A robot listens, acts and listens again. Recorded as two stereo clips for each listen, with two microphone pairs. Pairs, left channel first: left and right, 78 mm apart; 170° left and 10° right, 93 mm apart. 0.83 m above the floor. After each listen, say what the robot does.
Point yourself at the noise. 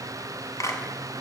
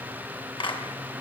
Turn 140° left.
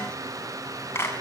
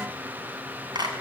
Turn 30° left.
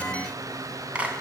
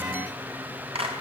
Turn 20° right.
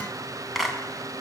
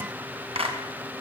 Found it: a clap, straight ahead.